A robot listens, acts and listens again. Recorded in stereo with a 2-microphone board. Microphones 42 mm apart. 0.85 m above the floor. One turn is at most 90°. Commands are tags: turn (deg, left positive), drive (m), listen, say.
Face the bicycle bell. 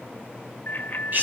<turn deg="40"/>
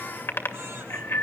<turn deg="90"/>
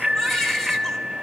<say>Found it: a bicycle bell, straight ahead.</say>